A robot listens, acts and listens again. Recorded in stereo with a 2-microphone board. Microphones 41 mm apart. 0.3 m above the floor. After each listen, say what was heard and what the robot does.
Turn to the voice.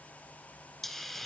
Keep listening.
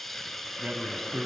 The man speaking: about 35° right or 145° right. Turn 35° right.
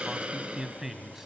So it is at 10° right. Turn 10° right.
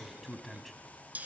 Facing the man speaking, 1 to 2 m away.